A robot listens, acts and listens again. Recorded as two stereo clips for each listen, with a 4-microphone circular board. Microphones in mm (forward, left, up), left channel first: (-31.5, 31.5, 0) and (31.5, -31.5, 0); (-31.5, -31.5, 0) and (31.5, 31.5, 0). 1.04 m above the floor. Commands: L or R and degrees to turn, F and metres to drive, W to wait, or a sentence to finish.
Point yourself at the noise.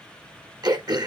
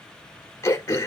R80
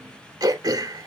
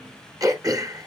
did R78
Facing the throat clearing.